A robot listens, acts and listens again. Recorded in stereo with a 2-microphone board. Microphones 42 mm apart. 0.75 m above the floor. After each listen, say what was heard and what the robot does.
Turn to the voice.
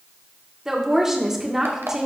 Turn 30° right.
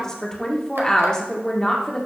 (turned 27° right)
So it is at 20° left. Turn 20° left.
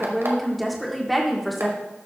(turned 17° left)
Facing the woman speaking.